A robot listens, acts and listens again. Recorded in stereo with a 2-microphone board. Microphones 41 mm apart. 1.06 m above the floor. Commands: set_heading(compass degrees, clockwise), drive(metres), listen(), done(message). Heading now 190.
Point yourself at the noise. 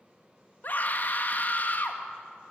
set_heading(140)
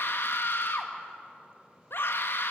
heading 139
set_heading(64)
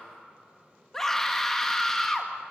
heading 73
set_heading(63)
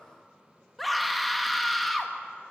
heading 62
done("Found it: a scream, straight ahead.")